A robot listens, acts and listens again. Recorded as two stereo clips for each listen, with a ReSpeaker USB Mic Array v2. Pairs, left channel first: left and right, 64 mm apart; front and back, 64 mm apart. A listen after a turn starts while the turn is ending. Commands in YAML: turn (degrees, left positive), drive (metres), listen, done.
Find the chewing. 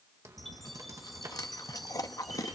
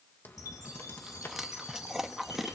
turn: 95
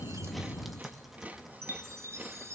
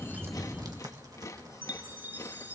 turn: -30
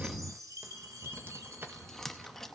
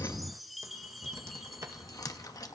done: "Found it: chewing, straight ahead."